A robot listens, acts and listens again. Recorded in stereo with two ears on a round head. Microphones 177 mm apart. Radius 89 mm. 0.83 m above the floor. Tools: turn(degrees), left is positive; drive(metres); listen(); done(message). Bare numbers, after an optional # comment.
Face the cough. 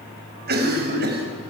# The cough: about 50° right or 130° right.
turn(-50)
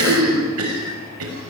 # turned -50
# So it is at 75° right.
turn(-75)
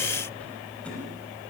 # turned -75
listen()
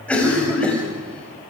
done("Facing the cough, over 4 m away.")